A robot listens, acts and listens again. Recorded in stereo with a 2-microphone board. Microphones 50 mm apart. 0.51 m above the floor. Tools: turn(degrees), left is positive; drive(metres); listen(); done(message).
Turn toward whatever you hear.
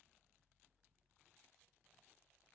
listen()
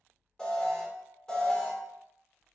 turn(degrees=15)
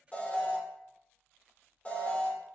turn(degrees=150)
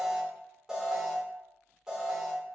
turn(degrees=-10)
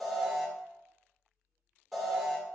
done("Found it: an alarm, straight ahead.")